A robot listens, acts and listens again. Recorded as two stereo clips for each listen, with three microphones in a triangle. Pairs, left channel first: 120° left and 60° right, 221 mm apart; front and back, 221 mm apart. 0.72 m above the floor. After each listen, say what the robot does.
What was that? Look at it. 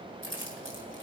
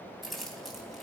Turn 90° right.
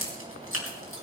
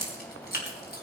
Turn 45° right.
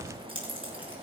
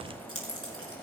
Facing the keys jangling.